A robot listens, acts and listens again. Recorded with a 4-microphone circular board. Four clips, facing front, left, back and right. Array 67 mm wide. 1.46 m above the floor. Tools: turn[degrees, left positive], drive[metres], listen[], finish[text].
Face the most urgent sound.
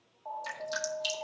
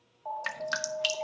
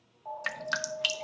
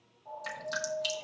Thought: The alarm: 80° left.
Action: turn[80]
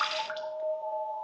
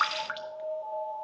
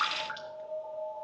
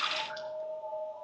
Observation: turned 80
Thought: The alarm is now 20° left.
Action: turn[20]
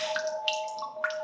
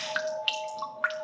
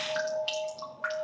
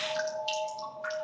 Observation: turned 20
Thought: The alarm is now 10° left.
Action: turn[10]
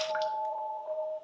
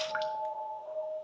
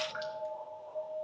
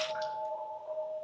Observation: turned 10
Action: finish[Facing the alarm.]